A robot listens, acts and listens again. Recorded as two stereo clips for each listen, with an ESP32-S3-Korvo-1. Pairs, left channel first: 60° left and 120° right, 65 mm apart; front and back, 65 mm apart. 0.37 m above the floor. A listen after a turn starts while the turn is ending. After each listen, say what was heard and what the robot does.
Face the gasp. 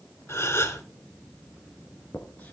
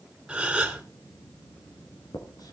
The gasp: 105° left. Turn 105° left.
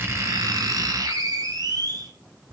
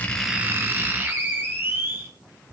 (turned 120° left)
Nothing new. It was at 15° right. Turn 15° right.
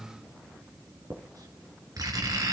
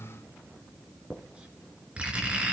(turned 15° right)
Facing where the gasp came from. I can't hear it now.